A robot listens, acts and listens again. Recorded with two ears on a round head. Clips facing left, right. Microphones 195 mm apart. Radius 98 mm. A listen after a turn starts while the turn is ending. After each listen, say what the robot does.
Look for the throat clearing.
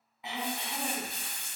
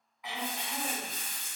Turn 25° left.
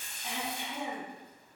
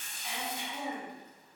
Turn 130° left.
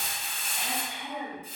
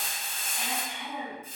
Turn 10° right.
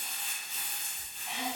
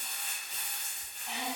Facing the throat clearing.